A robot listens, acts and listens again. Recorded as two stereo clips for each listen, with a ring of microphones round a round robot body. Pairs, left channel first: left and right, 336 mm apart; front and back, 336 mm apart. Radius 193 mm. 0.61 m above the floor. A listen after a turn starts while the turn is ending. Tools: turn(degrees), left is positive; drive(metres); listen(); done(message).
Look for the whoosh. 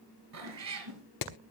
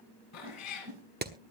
turn(degrees=-135)
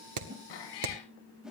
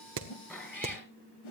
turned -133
done("Facing the whoosh.")